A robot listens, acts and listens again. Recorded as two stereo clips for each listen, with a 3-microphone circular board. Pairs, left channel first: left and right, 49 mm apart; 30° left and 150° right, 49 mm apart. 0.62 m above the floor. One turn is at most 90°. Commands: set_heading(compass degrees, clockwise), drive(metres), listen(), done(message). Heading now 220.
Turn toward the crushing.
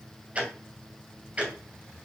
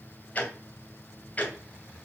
listen()
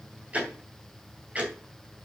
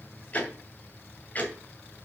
listen()
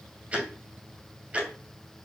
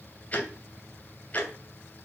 done("I can't make out crushing to turn to.")